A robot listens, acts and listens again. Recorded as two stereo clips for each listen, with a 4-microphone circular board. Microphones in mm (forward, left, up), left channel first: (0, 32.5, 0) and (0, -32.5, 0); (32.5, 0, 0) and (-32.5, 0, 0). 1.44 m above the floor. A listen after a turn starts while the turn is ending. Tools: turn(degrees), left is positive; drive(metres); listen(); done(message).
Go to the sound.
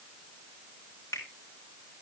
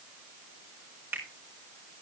turn(degrees=125)
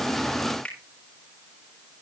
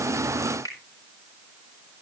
turn(degrees=15)
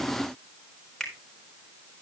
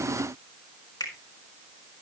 drive(metres=1.0)
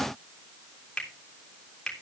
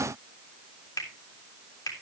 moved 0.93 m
turn(degrees=10)
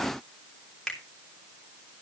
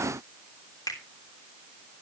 drive(metres=1.0)
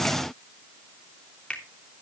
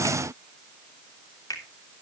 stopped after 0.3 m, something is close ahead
turn(degrees=15)
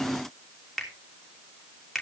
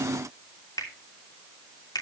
done("Something is in my way. I am facing the finger snap but have not reached it.")